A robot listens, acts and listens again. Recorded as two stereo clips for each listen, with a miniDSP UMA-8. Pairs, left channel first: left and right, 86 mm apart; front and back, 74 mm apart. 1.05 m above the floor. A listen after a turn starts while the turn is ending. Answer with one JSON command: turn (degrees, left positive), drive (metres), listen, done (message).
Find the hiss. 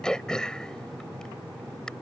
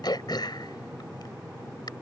{"listen": true}
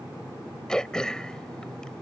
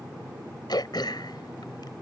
{"listen": true}
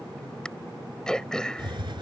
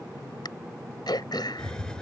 {"turn": -80}
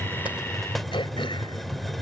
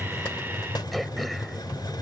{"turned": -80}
{"done": "Facing the hiss."}